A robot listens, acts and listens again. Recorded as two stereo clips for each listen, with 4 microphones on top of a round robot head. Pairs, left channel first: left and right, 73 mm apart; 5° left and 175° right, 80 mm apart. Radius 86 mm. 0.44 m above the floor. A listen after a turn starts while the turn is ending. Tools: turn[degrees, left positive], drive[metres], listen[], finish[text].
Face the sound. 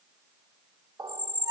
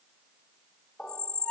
Thought: The squeak: 70° right.
Action: turn[-70]
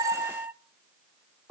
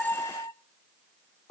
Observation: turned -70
Thought: The squeak is now 30° right.
Action: turn[-30]
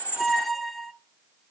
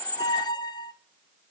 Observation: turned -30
Action: finish[Found it: a squeak, straight ahead, under 1 m away.]